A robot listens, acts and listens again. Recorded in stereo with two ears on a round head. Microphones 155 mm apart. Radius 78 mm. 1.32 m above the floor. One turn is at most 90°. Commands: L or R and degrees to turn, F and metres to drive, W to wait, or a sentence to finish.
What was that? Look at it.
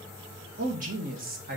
R50
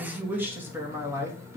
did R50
R15
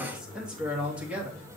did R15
R10
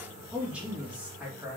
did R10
R10
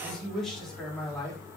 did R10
Found it: a man speaking, straight ahead, 2 to 4 m away.